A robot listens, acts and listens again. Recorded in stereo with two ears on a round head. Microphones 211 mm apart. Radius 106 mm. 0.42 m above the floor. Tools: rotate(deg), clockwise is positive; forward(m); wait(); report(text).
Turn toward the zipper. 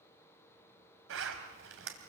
rotate(60)
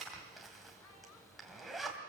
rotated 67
report("Facing the zipper, 2 to 4 m away.")